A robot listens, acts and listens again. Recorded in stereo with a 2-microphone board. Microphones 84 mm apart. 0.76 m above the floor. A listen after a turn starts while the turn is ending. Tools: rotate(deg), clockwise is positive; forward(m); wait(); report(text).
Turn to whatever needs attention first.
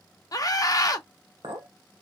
rotate(-45)
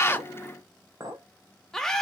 report("Found it: a scream, straight ahead, under 1 m away.")